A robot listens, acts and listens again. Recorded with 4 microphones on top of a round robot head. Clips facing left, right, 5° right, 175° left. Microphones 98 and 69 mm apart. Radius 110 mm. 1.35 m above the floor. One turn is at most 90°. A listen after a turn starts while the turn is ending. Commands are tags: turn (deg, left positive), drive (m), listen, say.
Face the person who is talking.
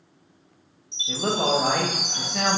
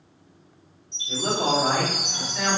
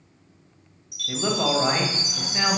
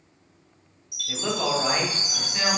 <turn deg="70"/>
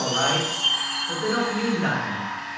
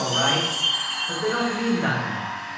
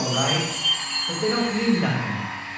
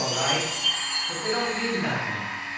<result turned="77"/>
<turn deg="-10"/>
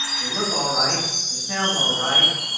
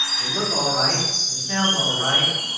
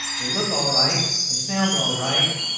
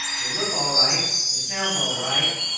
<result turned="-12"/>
<say>Found it: a man speaking, straight ahead.</say>